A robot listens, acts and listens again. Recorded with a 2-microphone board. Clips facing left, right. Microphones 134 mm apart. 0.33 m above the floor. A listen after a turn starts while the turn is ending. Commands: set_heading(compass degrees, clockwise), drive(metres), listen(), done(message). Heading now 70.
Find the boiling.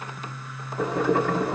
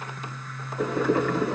set_heading(30)
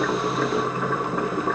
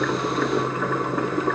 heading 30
done("Facing the boiling, 1 to 2 m away.")